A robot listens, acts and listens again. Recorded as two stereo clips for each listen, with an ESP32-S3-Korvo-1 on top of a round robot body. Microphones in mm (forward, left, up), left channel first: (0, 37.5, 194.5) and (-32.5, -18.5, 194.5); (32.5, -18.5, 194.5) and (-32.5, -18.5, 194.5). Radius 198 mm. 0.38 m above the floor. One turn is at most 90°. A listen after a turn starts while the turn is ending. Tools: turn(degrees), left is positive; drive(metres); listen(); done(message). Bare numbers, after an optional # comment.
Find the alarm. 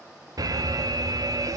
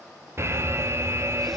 # The alarm: 135° right.
turn(-90)
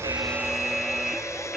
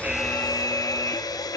# The alarm is now 30° right.
turn(-30)
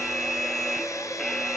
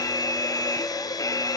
# The alarm is now 25° right.
turn(-25)
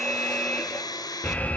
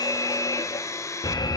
done("Found it: an alarm, straight ahead, 1 to 2 m away.")